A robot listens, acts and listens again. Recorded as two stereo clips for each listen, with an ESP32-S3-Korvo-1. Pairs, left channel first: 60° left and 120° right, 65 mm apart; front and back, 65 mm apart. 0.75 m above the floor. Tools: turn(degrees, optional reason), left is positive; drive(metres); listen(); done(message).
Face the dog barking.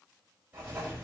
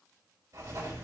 listen()
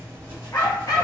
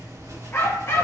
turn(degrees=45, reason="The dog barking: 45° left.")
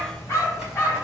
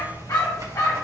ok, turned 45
done("Found it: a dog barking, straight ahead.")